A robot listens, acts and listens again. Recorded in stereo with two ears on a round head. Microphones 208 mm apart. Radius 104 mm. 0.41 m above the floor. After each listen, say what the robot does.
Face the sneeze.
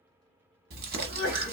Turn 50° right.
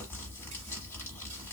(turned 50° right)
Keep listening.
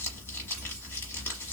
I heard a sneeze, but can't make it out now. It was about straight ahead or 80° right.